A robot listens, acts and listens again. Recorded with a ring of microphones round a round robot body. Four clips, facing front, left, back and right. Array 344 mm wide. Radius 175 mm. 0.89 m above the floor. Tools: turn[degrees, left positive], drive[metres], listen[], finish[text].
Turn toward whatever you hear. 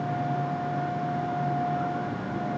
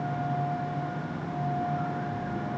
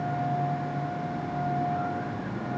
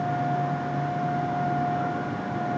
Action: listen[]
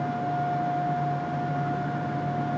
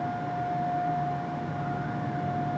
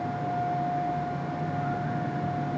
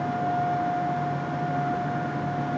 Action: listen[]
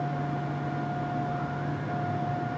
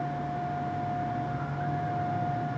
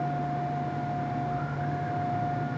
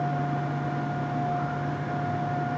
Action: finish[I can't make out anything to turn to.]